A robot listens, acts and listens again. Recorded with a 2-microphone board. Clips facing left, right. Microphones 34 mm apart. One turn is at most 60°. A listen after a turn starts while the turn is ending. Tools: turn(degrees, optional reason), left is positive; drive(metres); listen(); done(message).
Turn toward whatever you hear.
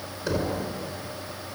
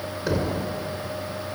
turn(degrees=-30)
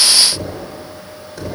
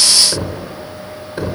turn(degrees=-60, reason="So it is at 140° right.")
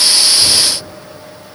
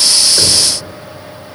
turn(degrees=-60, reason="Nothing new. It was at 80° right.")
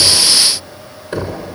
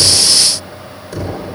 turn(degrees=40, reason="The knocking is now 40° left.")
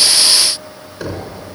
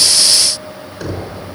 turn(degrees=15, reason="The knocking is now 15° left.")
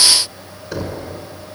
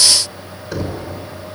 done("Facing the knocking.")